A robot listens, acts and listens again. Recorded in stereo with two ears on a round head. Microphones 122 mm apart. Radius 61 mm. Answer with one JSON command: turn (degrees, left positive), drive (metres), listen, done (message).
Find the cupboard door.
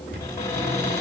{"turn": 25}
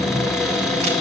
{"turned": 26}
{"done": "Facing the cupboard door."}